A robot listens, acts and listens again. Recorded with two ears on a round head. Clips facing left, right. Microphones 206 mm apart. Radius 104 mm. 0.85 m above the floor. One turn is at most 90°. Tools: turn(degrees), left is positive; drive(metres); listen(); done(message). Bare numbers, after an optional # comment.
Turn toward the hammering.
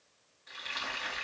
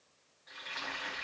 listen()
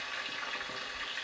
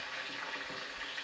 listen()
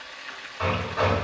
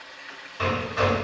# The hammering: about 40° right or 140° right.
turn(-40)
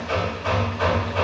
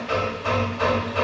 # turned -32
# So it is at 10° right.
turn(-10)
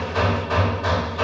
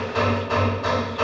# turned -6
done("Found it: hammering, straight ahead.")